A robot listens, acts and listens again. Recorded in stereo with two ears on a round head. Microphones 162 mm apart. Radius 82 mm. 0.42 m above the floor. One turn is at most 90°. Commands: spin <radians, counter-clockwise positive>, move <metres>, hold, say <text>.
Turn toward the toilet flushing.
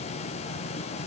hold
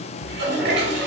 spin -1.13
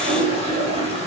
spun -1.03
spin -0.70
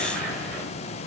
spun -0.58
say Facing the toilet flushing.